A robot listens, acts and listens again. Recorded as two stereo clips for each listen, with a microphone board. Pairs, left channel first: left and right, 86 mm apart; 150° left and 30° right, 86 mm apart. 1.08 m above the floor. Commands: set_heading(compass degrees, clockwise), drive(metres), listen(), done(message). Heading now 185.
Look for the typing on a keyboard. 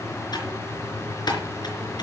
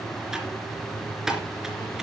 set_heading(130)
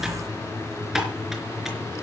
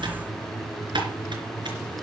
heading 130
done("Facing the typing on a keyboard.")